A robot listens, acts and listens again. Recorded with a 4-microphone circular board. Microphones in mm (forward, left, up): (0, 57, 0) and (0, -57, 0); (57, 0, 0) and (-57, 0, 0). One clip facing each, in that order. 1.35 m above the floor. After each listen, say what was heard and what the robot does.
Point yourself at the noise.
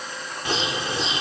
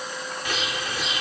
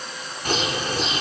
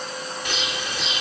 The bird: 35° left. Turn 35° left.
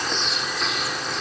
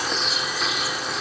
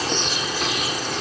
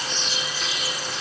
Found it: a bird, straight ahead.